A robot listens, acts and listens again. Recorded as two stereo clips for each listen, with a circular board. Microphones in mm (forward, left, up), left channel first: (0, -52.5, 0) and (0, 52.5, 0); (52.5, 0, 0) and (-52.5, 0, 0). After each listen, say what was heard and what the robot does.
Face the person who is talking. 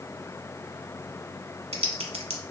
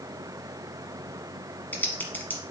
Keep listening.
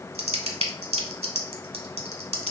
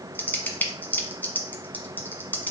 Keep listening.
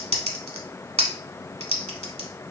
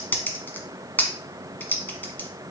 I can't make out anyone speaking, only typing on a keyboard.